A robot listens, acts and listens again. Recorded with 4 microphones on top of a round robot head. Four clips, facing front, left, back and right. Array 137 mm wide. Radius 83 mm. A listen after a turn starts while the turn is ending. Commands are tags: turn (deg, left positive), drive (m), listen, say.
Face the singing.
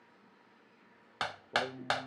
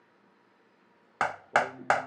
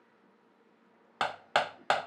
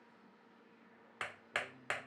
<turn deg="45"/>
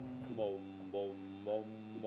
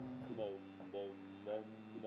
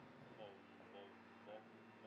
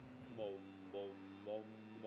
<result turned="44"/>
<turn deg="10"/>
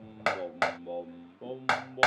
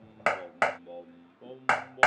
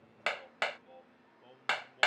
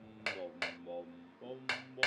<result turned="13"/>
<say>Found it: singing, straight ahead.</say>